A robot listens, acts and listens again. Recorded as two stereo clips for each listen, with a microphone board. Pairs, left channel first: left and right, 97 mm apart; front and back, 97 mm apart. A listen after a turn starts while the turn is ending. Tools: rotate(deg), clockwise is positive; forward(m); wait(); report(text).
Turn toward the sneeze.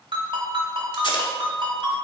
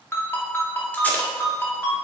wait()
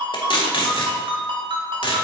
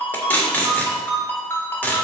wait()
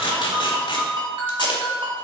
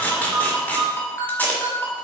report("I can't make out a sneeze to turn to.")